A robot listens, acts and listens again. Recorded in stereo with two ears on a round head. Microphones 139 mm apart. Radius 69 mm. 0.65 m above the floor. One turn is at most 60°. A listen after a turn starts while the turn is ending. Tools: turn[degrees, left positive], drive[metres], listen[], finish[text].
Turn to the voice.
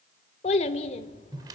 Thought: The child speaking: about 45° left or 135° left.
Action: turn[45]
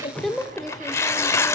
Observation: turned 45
Action: finish[Found it: a child speaking, straight ahead.]